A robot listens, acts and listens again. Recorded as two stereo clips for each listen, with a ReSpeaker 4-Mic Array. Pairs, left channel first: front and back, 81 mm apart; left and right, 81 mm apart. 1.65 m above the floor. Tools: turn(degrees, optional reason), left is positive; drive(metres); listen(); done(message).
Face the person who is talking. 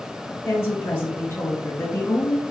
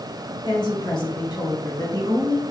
turn(degrees=65, reason="The woman speaking: 65° left.")
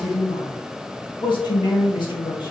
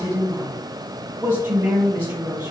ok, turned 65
turn(degrees=-20, reason="The woman speaking is now 20° right.")
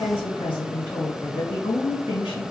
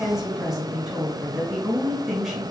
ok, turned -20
done("Found it: a woman speaking, straight ahead, 1 to 2 m away.")